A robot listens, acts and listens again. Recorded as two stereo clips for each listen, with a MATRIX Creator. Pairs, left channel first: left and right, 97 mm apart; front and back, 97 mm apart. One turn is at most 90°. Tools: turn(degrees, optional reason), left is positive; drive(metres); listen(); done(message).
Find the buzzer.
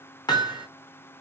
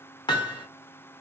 listen()
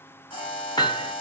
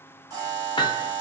turn(degrees=90, reason="The buzzer: 125° left.")
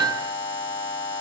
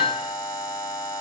turn(degrees=45, reason="The buzzer is now 45° left.")
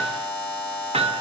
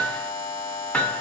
turn(degrees=10, reason="The buzzer is now 10° left.")
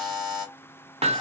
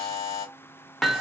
done("Facing the buzzer, 2 to 4 m away.")